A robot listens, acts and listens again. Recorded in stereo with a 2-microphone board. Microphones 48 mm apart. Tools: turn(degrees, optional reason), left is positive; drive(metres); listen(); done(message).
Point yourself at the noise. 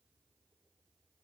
listen()
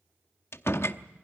turn(degrees=60, reason="The door slam: about 60° left or 120° left.")
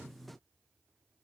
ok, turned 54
listen()
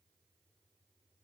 done("I heard a door slam, but can't make it out now. It was about 5° left or 70° left.")